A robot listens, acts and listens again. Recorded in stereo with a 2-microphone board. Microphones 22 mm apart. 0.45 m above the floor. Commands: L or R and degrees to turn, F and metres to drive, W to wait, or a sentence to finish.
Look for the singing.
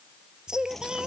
R35
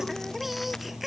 Facing the singing.